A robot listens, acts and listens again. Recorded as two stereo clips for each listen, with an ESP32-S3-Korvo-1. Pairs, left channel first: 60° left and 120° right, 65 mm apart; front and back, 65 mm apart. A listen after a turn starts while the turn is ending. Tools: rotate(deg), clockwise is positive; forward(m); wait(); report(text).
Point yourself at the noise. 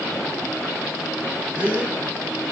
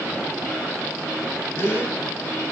rotate(55)
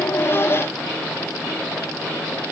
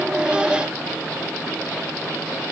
report("I heard a gasp from this way, but can't make it out now.")